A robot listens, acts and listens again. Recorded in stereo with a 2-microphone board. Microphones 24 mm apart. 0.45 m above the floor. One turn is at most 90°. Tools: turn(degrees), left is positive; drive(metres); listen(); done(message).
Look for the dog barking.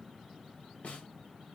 listen()
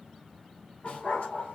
turn(degrees=90)
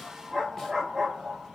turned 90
done("Facing the dog barking.")